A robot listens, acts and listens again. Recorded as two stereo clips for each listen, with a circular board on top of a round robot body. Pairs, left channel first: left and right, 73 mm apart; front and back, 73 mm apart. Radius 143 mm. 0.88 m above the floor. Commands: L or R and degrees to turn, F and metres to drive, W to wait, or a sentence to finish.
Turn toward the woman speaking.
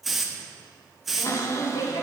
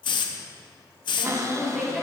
L95
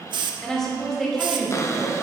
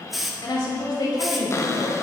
Found it: a woman speaking, straight ahead.